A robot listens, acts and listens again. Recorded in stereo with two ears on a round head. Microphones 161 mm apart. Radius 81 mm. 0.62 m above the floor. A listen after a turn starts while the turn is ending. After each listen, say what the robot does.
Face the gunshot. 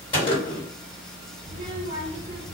Turn 30° left.
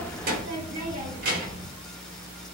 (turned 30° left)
Keep listening.
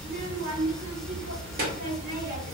I heard a gunshot, but can't make it out now. It was about straight ahead or 120° left.